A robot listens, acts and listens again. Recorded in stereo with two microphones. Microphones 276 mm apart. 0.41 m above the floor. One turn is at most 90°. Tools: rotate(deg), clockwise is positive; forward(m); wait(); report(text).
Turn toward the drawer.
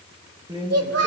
rotate(15)
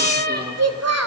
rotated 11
wait()
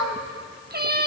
wait()
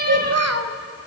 report("I heard a drawer, but can't make it out now. It was about 5° right or 155° right.")